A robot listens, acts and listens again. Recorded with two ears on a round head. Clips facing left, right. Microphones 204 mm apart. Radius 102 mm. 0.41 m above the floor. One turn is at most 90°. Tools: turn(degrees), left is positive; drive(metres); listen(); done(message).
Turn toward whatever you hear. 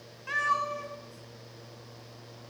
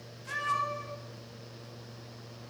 turn(degrees=65)
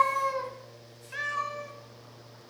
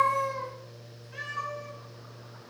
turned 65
turn(degrees=75)
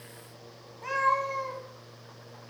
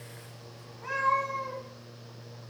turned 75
turn(degrees=55)
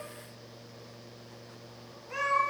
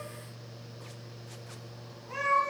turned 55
turn(degrees=10)
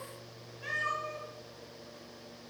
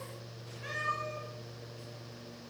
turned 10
done("Found it: a cat meowing, straight ahead.")